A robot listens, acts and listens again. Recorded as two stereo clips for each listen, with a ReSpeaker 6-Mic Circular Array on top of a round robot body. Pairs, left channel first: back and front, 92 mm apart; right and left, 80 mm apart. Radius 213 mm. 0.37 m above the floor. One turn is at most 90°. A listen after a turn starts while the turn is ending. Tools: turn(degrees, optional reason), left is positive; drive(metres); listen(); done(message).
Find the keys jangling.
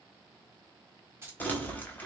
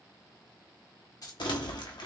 turn(degrees=-65, reason="The keys jangling: 65° right.")
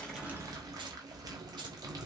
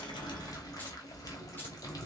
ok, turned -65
listen()
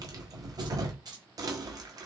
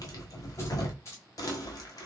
turn(degrees=-40, reason="The keys jangling is now 40° right.")
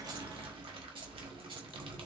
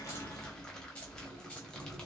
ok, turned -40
turn(degrees=-15, reason="The keys jangling is now 15° right.")
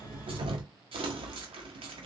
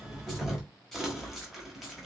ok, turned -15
listen()
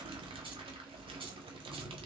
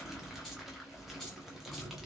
listen()
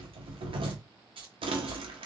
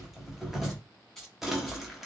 done("Found it: keys jangling, straight ahead, 2 to 4 m away.")